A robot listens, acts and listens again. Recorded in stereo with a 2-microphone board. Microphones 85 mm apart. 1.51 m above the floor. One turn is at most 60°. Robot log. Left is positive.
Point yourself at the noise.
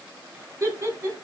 note: The laughter: about 30° right or 150° right.
cmd yaw -30
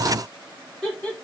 note: So it is at 10° left.
cmd yaw +10
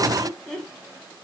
note: The laughter is now 10° left.
cmd yaw +10
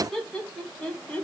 note: The laughter is now 10° left.
cmd yaw +10
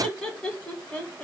note: The laughter is now 10° left.
cmd yaw +10
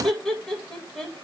end: Found it: laughter, straight ahead.